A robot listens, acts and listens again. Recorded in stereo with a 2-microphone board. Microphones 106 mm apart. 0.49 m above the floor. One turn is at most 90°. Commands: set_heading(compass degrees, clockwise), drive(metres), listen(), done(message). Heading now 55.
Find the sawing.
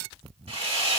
set_heading(130)
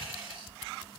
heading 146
set_heading(161)
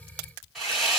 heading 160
done("Found it: sawing, straight ahead, 2 to 4 m away.")